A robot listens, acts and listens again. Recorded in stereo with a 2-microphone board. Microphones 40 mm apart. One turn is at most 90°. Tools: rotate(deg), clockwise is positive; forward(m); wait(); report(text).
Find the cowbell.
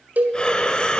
rotate(45)
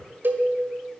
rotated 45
rotate(80)
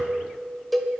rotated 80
report("Facing the cowbell.")